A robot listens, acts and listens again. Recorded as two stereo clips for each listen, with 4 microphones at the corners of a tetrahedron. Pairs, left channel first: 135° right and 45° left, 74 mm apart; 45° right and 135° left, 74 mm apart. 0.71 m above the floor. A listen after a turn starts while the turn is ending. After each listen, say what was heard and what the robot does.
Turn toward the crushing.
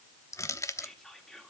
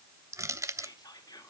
The crushing: straight behind. Turn 180° left.
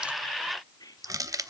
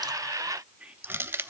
The crushing is now 80° left. Turn 80° left.
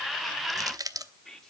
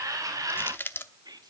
The crushing is now 15° left. Turn 15° left.
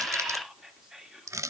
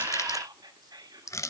Facing the crushing.